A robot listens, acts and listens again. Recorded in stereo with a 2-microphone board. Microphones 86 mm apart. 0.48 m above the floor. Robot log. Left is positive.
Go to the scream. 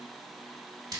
cmd idle
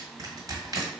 cmd idle
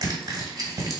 end: I can't make out a scream, only crushing.